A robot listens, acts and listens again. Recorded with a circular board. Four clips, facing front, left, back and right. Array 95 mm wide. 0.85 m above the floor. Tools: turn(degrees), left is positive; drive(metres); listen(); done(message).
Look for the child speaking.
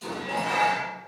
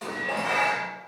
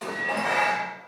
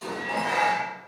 listen()
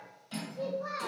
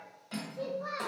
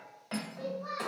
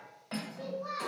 turn(degrees=55)
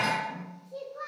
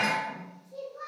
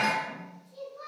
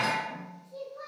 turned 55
turn(degrees=10)
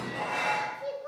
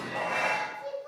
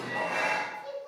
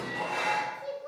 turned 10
done("Found it: a child speaking, straight ahead, 1 to 2 m away.")